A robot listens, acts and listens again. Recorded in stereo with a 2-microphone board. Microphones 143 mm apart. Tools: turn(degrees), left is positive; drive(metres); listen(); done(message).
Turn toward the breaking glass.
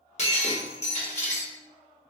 turn(degrees=50)
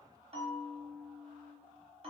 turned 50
listen()
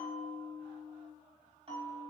done("I heard breaking glass, but can't make it out now. It was about straight ahead or 80° left.")